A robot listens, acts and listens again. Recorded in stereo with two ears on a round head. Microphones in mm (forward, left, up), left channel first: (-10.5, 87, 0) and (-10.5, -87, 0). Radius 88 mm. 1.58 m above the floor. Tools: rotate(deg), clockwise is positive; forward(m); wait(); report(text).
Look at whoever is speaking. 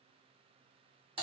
wait()
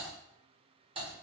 wait()
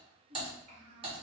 rotate(35)
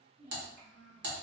rotate(45)
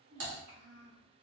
rotate(115)
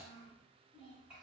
report("Found it: a child speaking, straight ahead.")